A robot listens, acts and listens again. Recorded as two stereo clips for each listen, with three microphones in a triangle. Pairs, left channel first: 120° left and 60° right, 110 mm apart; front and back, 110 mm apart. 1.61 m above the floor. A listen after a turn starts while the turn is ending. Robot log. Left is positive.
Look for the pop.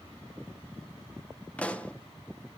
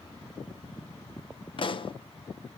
note: The pop: 40° left.
cmd yaw +40
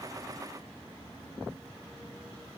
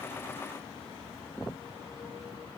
end: I heard a pop from this way, but can't make it out now.